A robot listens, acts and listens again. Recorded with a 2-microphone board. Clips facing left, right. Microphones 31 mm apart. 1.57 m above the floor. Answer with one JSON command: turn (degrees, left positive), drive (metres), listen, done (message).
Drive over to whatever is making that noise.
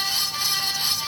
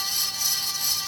{"listen": true}
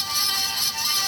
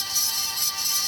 {"listen": true}
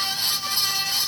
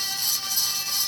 {"done": "I can't make out anything."}